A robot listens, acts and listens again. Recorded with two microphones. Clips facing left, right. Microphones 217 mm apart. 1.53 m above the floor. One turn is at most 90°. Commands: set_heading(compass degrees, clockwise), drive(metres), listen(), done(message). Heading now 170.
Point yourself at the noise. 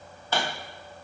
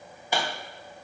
set_heading(200)
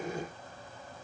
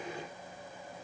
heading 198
listen()
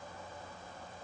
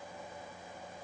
done("I heard a pop, but can't make it out now. It was about 15° left or 140° right.")